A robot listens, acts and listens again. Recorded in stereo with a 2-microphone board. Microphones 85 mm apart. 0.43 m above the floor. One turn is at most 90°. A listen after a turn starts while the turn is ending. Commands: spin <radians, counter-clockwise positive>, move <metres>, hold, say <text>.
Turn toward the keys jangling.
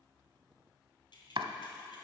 spin 1.22
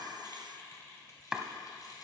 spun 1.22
spin 0.87
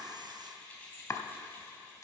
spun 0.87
spin 0.35
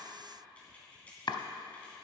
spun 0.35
spin 0.26
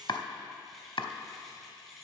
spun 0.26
say Found it: keys jangling, straight ahead, 2 to 4 m away.